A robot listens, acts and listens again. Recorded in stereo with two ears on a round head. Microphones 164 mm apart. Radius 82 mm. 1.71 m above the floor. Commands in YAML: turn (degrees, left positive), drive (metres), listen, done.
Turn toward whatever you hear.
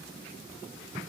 listen: true
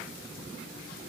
listen: true
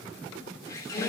turn: 15
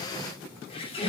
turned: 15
turn: 150
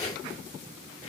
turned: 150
turn: 40
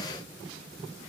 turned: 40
listen: true
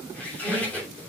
turn: 10
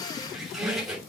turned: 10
done: "Facing the squeak."